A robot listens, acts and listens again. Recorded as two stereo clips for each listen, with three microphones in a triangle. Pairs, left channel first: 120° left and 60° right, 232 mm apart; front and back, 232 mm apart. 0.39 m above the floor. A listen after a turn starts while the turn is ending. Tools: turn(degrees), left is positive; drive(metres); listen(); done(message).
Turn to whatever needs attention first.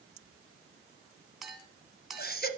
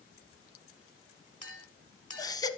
turn(degrees=75)
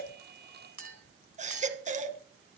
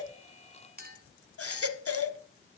done("Facing the baby crying.")